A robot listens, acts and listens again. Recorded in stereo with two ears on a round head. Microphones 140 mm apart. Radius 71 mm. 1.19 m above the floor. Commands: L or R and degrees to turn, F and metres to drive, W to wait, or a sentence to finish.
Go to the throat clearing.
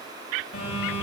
W
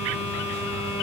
W
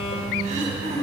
R50
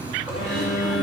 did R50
W
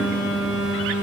W
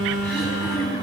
F1.0
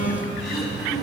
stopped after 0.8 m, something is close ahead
Blocked. The throat clearing is further on, straight ahead.